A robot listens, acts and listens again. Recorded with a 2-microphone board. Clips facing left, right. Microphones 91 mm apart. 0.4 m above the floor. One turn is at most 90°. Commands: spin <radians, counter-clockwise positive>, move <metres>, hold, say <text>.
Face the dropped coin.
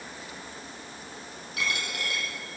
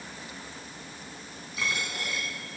spin 1.22
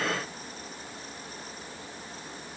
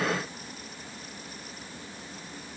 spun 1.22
hold
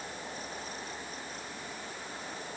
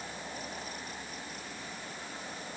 say I heard a dropped coin, but can't make it out now. It was about straight ahead or 40° left.